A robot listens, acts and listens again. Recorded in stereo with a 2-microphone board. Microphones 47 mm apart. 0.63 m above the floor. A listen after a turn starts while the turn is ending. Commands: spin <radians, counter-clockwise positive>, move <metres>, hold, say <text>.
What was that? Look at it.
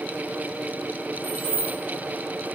spin -0.87
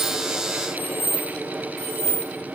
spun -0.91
spin -1.31
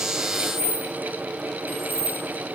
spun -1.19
say Facing the keys jangling, 1 to 2 m away.